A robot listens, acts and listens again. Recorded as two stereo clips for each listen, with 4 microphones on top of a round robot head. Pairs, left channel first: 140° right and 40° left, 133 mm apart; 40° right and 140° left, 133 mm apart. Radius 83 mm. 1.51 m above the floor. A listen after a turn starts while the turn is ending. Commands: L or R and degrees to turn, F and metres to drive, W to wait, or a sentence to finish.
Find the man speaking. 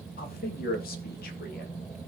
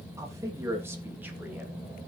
R145
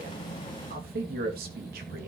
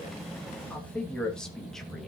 L45
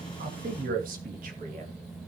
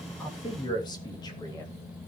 L20
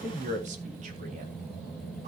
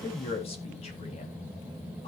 Facing the man speaking, 2 to 4 m away.